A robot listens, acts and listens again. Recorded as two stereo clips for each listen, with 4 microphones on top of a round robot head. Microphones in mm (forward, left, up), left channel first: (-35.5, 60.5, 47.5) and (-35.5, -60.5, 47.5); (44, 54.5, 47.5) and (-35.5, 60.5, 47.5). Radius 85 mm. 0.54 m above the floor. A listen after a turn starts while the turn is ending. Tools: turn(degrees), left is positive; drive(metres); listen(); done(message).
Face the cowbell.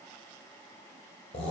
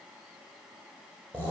listen()
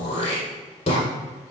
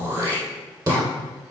listen()
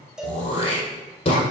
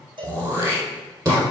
turn(degrees=-175)
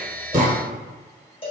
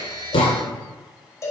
turn(degrees=45)
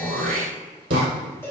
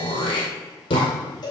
turn(degrees=15)
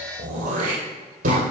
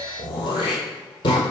listen()
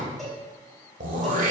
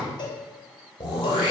done("Facing the cowbell, 2 to 4 m away.")